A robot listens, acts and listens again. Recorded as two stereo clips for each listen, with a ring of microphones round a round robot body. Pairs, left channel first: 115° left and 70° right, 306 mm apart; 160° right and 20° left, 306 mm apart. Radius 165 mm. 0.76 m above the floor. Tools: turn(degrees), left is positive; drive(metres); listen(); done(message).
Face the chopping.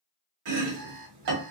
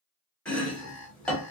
turn(degrees=-70)
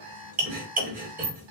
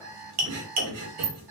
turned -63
done("Facing the chopping, 1 to 2 m away.")